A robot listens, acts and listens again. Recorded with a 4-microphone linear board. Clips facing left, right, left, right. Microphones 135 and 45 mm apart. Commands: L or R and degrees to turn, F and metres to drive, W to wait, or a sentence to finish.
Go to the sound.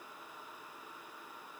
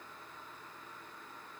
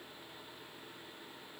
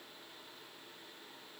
W
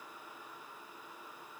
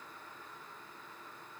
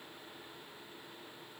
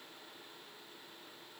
W
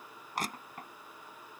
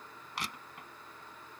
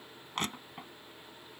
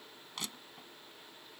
L45
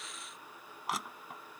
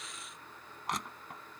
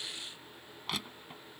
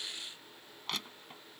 F1.0
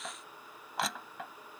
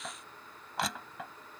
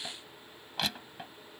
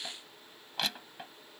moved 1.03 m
F1.0
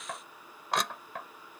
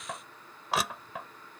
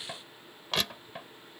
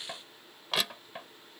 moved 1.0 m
F1.0
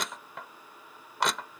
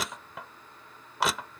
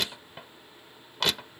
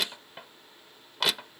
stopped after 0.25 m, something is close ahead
I am next to the crushing.